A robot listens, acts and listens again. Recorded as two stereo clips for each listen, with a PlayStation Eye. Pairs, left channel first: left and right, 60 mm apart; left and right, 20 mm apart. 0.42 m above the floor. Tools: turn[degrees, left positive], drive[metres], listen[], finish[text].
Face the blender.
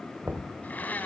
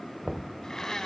Thought: The blender: about 30° left or 150° left.
Action: turn[30]
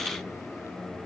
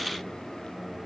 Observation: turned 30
Action: listen[]
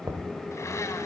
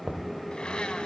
Action: listen[]
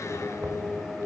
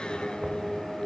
Action: finish[I heard a blender, but can't make it out now. It was about straight ahead or 120° left.]